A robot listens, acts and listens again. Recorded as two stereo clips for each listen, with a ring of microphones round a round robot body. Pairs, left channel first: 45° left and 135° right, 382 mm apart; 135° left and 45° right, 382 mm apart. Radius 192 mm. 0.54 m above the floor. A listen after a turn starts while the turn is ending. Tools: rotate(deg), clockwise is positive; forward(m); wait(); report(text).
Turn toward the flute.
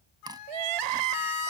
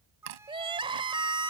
rotate(-40)
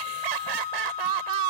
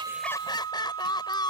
rotate(-15)
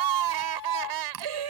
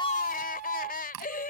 report("Facing the flute.")